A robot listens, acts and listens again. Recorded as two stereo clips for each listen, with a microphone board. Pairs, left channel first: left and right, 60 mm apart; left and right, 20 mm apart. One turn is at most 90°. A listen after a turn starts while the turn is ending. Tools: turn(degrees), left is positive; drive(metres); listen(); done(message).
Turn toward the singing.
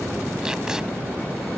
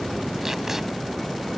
listen()
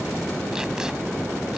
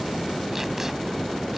listen()
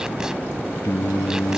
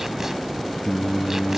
turn(degrees=65)
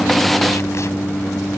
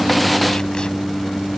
turn(degrees=45)
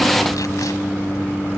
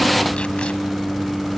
turn(degrees=20)
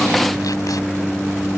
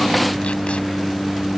done("Found it: singing, straight ahead.")